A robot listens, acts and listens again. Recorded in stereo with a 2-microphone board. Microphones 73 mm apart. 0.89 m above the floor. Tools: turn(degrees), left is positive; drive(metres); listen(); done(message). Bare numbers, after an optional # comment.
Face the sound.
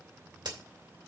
turn(-90)
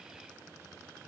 done("Facing where the crack came from. I can't hear it now.")